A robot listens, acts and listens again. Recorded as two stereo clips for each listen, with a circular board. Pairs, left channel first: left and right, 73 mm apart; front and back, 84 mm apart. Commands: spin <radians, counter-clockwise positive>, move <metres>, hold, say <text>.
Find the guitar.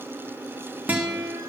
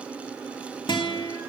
spin -0.44
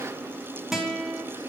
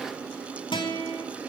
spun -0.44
say Found it: a guitar, straight ahead.